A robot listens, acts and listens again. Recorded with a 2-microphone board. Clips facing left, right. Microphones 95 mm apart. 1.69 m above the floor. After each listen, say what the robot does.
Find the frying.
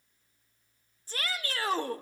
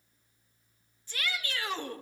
Keep listening.
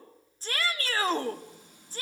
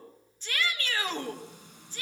Turn 70° right.
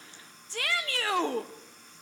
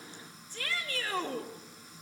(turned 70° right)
Facing the frying, over 4 m away.